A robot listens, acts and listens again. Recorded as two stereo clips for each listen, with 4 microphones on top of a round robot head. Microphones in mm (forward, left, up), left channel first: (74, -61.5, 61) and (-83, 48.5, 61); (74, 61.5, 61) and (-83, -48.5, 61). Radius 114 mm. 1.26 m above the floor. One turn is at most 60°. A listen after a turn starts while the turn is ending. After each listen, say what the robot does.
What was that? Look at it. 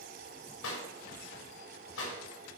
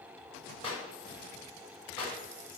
Turn 30° right.
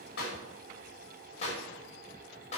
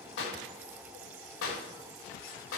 Turn 25° left.
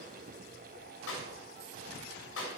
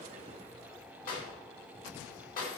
Turn 15° right.
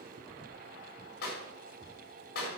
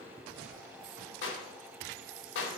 Found it: a clap, straight ahead.